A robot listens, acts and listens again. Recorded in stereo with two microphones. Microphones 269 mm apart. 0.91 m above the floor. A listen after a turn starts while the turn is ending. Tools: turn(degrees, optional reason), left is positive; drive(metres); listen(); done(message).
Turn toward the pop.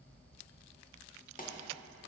turn(degrees=30, reason="The pop: about 30° left or 150° left.")
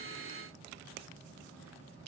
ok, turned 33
listen()
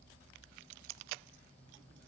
done("I heard a pop, but can't make it out now. It was about straight ahead or 115° left.")